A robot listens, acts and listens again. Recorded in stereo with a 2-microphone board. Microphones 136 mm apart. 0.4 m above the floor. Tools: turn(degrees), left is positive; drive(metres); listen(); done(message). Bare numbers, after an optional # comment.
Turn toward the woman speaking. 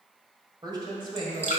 # The woman speaking: about 40° right or 140° right.
turn(-40)
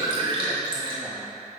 listen()
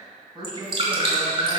# The woman speaking: about 35° right or 145° right.
turn(-35)
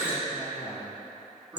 # So it is at 10° right.
turn(-10)
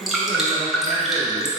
done("Found it: a woman speaking, straight ahead.")